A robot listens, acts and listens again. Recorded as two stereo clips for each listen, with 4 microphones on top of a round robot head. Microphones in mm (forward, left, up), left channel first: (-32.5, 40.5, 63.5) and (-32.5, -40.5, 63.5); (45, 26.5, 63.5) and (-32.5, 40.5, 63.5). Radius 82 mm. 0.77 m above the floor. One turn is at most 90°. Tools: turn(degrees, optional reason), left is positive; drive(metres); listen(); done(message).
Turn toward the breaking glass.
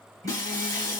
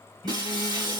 turn(degrees=90, reason="The breaking glass: 140° left.")
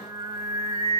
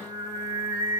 turn(degrees=50, reason="Nothing new. It was at 50° left.")
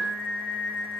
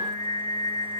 done("I heard breaking glass from this way, but can't make it out now.")